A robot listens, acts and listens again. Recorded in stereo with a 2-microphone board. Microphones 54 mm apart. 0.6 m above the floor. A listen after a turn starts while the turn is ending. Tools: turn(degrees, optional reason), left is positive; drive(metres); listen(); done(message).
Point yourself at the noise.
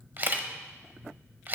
turn(degrees=-40, reason="The camera shutter: about 40° right or 140° right.")
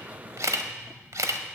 turn(degrees=-100, reason="So it is at 100° right.")
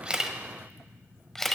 done("Facing the camera shutter.")